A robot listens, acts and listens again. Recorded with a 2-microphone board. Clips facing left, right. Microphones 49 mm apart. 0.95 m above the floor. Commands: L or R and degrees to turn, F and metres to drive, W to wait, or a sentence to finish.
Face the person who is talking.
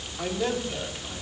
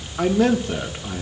R90
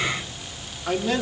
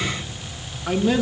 R10
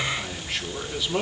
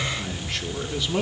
Facing the man speaking, 2 to 4 m away.